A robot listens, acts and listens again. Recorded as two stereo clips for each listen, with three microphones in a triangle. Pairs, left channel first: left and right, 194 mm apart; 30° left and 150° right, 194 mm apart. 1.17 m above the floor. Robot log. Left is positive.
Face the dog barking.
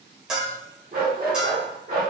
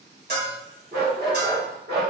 note: The dog barking: 125° right.
cmd yaw -125
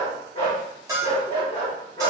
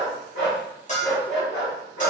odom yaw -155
note: The dog barking is now 35° left.
cmd yaw +35
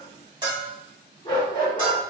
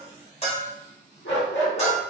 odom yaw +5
note: The dog barking is now 25° left.
cmd yaw +25
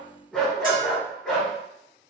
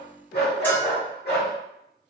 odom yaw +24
end: Facing the dog barking, 1 to 2 m away.